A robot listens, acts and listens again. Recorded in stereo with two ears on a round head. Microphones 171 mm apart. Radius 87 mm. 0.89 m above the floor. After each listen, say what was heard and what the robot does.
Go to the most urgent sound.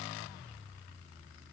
Keep listening.
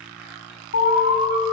The alarm: about 70° left or 110° left. Turn 70° left.
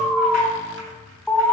Drive 1.0 m forward.
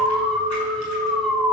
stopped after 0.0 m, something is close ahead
Something is in my way. I am facing the alarm but have not reached it.